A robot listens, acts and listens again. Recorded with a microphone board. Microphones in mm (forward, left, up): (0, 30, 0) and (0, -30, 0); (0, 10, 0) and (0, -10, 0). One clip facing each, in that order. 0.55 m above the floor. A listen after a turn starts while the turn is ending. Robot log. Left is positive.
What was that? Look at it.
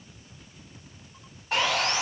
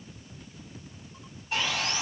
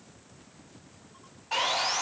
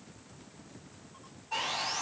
note: The sawing: about 70° left or 110° left.
cmd yaw +70
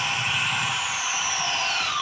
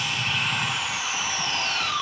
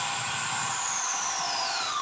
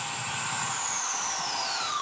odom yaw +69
end: Found it: sawing, straight ahead.